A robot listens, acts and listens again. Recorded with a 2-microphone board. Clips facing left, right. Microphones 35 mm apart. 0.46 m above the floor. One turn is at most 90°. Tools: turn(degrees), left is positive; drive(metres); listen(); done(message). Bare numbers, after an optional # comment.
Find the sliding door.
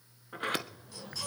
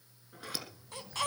# The sliding door: about 45° left or 135° left.
turn(45)
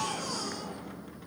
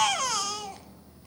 listen()
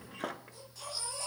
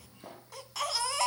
# So it is at 85° left.
turn(85)
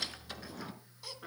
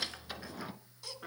# The sliding door is now 10° right.
turn(-10)
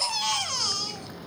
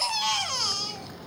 done("Found it: a sliding door, straight ahead.")